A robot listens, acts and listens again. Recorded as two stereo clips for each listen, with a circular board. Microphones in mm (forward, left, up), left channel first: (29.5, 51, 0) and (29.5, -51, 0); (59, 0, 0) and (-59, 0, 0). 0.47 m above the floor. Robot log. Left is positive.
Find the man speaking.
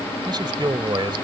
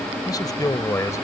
note: The man speaking: 60° right.
cmd yaw -60
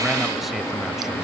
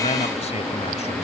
end: Found it: a man speaking, straight ahead.